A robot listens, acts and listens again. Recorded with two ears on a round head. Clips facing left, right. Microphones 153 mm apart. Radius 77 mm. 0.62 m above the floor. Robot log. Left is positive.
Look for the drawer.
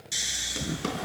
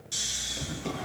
cmd yaw +90
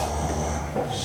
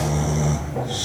cmd idle
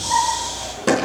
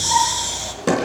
end: Found it: a drawer, straight ahead, over 4 m away.